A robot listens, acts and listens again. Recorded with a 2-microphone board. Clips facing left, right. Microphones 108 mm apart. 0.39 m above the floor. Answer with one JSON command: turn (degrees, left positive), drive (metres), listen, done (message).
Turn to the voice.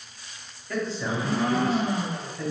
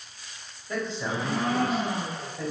{"turn": -20}
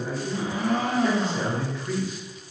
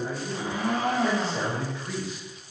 {"turn": -130}
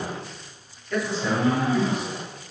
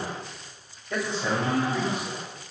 {"turn": -30}
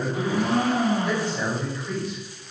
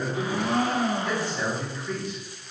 {"turn": 15}
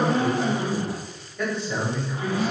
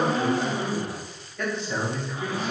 {"done": "Found it: a man speaking, straight ahead."}